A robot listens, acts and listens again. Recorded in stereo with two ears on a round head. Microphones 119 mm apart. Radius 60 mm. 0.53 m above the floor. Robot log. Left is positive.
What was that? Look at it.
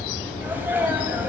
cmd yaw -30
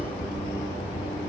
cmd idle
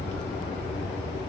end: I heard a sneeze, but can't make it out now. It was about 15° left or 135° right.